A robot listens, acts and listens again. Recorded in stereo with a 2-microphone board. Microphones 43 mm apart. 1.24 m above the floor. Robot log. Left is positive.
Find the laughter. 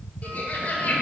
note: The laughter: about 40° left or 140° left.
cmd yaw +40
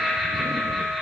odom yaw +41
end: Facing the laughter.